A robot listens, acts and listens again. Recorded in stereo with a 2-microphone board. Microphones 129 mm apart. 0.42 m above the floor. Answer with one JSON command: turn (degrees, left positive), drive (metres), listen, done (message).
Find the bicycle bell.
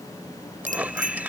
{"turn": -90}
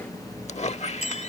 {"listen": true}
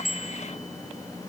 {"done": "Found it: a bicycle bell, straight ahead."}